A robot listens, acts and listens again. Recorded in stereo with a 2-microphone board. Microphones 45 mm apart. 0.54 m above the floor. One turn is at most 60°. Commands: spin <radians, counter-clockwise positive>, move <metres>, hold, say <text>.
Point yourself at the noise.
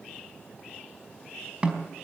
spin -0.44
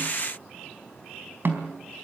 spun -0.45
spin -1.05
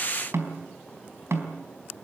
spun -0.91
spin -1.05
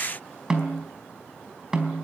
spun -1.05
spin -0.26
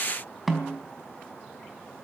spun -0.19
say Found it: a snare drum, straight ahead, over 4 m away.